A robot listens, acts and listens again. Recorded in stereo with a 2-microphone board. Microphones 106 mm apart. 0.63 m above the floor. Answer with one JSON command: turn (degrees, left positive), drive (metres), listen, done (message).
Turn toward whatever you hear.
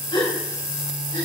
{"turn": 45}
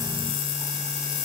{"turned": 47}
{"listen": true}
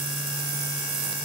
{"done": "I heard a gasp, but can't make it out now. It was about 5° right or 90° left."}